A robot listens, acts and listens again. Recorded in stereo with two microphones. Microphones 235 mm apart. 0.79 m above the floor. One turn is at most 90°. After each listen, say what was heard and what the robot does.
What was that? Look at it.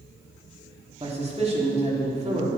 The man speaking: about 30° right or 150° right. Turn 30° right.
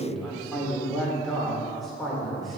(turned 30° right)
Found it: a man speaking, straight ahead, 2 to 4 m away.